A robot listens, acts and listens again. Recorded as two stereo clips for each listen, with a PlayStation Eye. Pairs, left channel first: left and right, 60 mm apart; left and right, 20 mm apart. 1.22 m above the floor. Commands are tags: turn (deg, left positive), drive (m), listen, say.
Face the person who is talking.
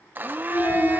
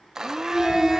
<turn deg="65"/>
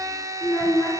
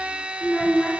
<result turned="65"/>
<turn deg="50"/>
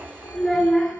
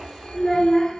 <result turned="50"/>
<say>Facing the child speaking.</say>